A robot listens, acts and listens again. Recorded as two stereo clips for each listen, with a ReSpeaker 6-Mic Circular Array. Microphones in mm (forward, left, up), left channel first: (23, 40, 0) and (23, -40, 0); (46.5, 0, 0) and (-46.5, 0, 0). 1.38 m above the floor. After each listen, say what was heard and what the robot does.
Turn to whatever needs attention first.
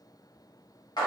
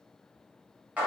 Keep listening.
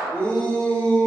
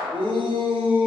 The shout: 165° left. Turn 165° left.
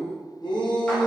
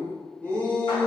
The shout is now 75° left. Turn 75° left.
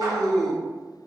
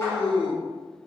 Facing the shout, under 1 m away.